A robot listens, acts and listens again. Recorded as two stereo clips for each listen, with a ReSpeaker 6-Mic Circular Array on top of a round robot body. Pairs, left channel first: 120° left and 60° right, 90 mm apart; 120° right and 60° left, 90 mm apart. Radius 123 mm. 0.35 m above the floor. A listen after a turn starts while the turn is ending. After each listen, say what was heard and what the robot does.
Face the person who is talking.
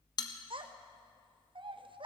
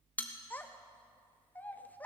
The child speaking: 50° right. Turn 50° right.
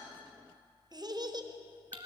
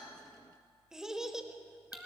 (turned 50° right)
The child speaking is now 25° right. Turn 25° right.
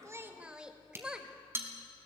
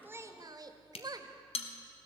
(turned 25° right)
The child speaking is now 20° left. Turn 20° left.
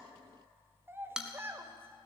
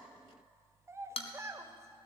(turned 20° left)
Facing the child speaking, 1 to 2 m away.